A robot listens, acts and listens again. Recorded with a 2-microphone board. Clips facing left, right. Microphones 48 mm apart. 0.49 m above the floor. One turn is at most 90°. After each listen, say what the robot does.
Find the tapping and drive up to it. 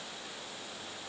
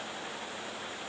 Keep listening.
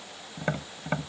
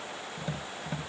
Turn 55° left.
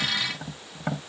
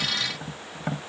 Drive 1.0 m forward.
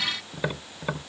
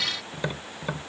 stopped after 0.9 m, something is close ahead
Turn 10° left.
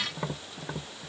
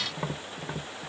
I am next to the tapping.